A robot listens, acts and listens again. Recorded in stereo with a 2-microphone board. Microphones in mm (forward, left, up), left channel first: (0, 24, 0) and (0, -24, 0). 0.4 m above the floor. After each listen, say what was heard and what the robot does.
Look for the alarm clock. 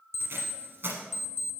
The alarm clock: about 70° left or 110° left. Turn 70° left.
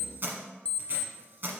So it is at 25° left. Turn 25° left.
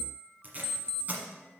The alarm clock is now 15° left. Turn 15° left.
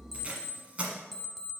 Found it: an alarm clock, straight ahead.